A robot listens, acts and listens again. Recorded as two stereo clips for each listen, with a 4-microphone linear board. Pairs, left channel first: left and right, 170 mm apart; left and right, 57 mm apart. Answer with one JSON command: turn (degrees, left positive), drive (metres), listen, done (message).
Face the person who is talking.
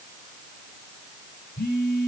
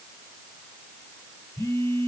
{"listen": true}
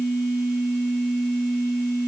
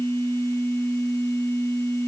{"listen": true}
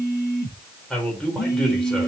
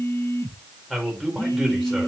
{"turn": 30}
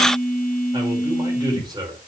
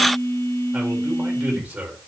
{"turn": -25}
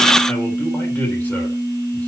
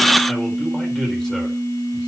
{"listen": true}
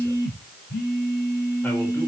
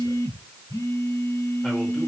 {"listen": true}
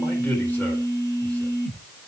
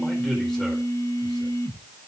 {"done": "Facing where the man speaking came from. I can't hear it now."}